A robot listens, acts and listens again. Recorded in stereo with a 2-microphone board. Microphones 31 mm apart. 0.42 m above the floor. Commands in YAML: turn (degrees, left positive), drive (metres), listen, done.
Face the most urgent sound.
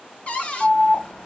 turn: 40
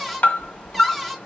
turn: 100
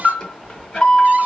turn: 25
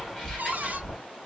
done: "Found it: an alarm, straight ahead."